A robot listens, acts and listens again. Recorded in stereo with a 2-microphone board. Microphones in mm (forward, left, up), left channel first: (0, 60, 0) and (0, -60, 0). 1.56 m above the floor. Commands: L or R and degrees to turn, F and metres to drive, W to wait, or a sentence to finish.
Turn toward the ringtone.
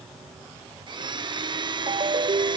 R50
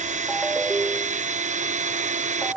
Found it: a ringtone, straight ahead.